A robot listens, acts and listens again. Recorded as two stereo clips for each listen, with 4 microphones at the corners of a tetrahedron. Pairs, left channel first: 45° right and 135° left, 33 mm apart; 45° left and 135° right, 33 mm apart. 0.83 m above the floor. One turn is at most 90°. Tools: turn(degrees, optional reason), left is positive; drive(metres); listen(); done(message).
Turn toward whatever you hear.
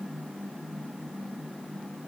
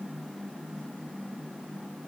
listen()
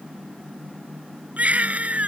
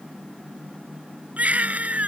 turn(degrees=90, reason="The baby crying: straight behind.")
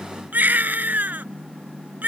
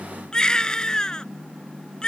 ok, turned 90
turn(degrees=90, reason="The baby crying is now 110° left.")
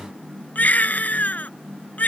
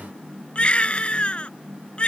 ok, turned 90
turn(degrees=-10, reason="The baby crying is now 10° right.")
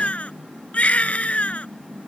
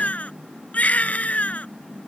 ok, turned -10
done("Found it: a baby crying, straight ahead.")